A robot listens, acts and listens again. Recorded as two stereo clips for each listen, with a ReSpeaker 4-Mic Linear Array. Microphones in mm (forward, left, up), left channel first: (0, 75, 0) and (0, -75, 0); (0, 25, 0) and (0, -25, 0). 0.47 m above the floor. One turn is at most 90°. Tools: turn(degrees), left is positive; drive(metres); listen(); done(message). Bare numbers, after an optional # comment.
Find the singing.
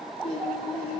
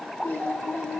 # The singing: about 40° left or 140° left.
turn(40)
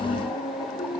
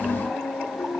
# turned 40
# So it is at 105° left.
turn(90)
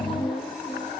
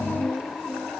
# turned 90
# The singing is now 15° left.
turn(15)
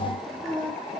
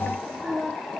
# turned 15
done("Facing the singing, over 4 m away.")